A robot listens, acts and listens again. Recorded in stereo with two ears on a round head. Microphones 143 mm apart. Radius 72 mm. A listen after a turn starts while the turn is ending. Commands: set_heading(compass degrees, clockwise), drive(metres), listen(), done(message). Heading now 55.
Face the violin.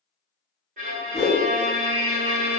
set_heading(100)
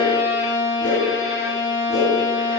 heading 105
done("Found it: a violin, straight ahead.")